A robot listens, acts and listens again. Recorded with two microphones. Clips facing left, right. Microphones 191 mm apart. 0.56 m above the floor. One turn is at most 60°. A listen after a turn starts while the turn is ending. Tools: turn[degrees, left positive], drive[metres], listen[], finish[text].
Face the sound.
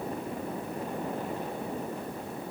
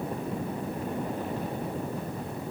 Action: listen[]
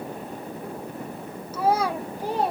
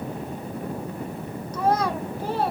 Thought: The child speaking: about 15° left or 165° left.
Action: turn[15]
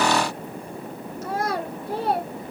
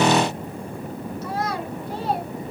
Thought: So it is at 125° left.
Action: turn[60]
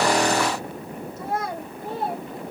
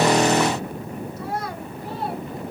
Thought: The child speaking is now 50° left.
Action: turn[50]
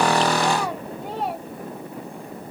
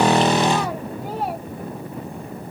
Action: listen[]
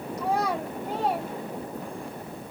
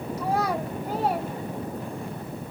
Action: finish[Facing the child speaking.]